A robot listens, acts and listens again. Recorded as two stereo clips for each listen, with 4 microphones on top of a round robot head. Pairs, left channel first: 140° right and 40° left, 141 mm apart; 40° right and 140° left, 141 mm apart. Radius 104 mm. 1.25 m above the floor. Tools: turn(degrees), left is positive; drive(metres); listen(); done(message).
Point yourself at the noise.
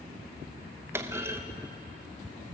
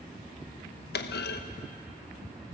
turn(degrees=-35)
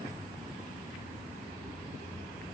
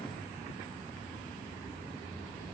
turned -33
done("Facing where the clunk came from. I can't hear it now.")